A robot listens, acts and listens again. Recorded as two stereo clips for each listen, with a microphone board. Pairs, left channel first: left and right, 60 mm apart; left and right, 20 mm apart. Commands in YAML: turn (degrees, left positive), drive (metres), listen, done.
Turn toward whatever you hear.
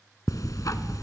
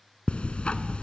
turn: 90
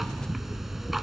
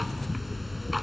done: "Found it: ticking, straight ahead, 1 to 2 m away."